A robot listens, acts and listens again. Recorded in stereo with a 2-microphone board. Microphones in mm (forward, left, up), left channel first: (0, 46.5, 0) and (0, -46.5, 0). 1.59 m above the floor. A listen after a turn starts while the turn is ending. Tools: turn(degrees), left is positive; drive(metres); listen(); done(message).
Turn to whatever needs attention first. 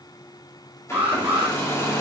turn(degrees=-20)
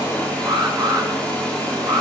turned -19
turn(degrees=-145)
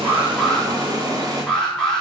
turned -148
done("Facing the alarm, 2 to 4 m away.")